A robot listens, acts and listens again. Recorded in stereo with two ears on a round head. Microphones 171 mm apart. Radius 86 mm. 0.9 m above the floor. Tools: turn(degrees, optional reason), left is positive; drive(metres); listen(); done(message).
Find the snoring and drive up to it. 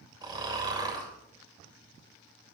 turn(degrees=-25, reason="The snoring: about 25° right or 155° right.")
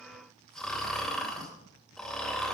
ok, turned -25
drive(metres=1.0)
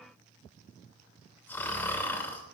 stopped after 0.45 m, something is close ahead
turn(degrees=10, reason="The snoring is now 10° left.")
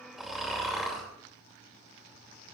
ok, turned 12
done("Blocked. The snoring is further on, straight ahead.")